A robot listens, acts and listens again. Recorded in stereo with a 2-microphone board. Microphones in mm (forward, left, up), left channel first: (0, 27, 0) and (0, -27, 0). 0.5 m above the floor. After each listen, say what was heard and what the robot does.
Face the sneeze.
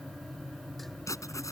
Keep listening.
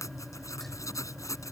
Keep listening.
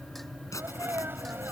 The sneeze: about 45° right or 135° right. Turn 45° right.
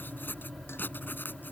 Keep listening.
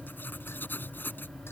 I heard a sneeze, but can't make it out now. It was about straight ahead or 90° right.